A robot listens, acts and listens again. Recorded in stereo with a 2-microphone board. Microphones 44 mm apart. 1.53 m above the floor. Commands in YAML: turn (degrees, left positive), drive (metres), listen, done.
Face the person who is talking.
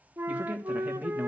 turn: -30
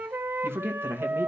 turn: -120
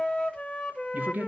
turn: -40
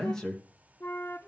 turn: 10
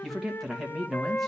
done: "Facing the man speaking."